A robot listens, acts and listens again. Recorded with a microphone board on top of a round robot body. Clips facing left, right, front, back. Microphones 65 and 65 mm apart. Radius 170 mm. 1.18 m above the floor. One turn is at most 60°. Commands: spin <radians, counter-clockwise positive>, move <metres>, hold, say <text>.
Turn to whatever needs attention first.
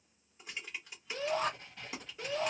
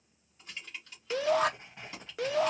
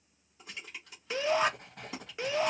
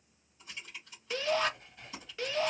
spin -1.05
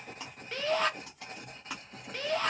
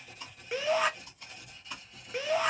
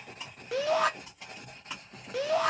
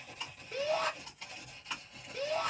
spin -0.17
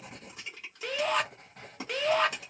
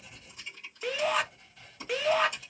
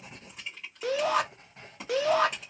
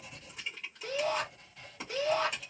say Facing the shout, under 1 m away.